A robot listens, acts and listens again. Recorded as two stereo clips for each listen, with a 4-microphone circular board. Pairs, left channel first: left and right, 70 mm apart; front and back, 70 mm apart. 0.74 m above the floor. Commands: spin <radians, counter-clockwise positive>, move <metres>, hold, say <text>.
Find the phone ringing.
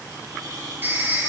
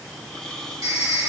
spin -2.53
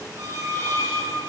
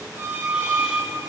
hold
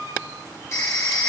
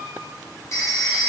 spin 0.79
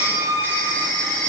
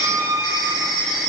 spin 0.52
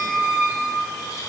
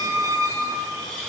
hold
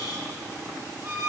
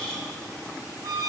hold
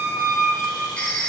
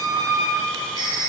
spin 0.26
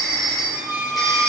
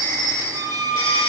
say Facing the phone ringing, 2 to 4 m away.